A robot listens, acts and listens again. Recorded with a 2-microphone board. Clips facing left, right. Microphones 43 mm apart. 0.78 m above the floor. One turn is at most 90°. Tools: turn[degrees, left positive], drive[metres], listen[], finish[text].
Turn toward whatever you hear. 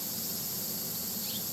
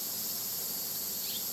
Action: listen[]
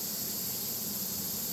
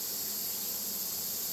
Action: listen[]
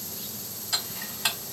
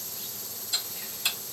Thought: The ticking: about 70° left or 110° left.
Action: turn[70]
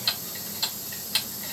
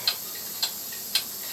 Action: finish[Facing the ticking.]